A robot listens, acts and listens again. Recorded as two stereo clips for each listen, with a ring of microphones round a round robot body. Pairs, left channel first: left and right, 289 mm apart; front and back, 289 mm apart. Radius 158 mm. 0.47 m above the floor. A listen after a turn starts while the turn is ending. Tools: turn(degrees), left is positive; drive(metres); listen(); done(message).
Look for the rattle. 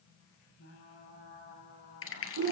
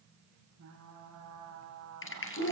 turn(degrees=45)
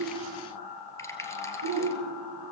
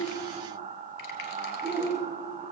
listen()
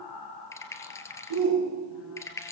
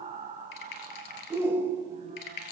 turn(degrees=10)
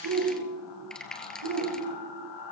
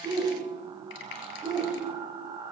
done("Facing the rattle.")